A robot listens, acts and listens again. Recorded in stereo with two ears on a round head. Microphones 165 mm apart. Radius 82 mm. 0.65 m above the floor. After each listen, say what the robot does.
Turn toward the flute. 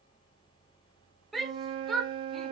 Turn 30° right.
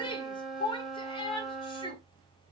Found it: a flute, straight ahead.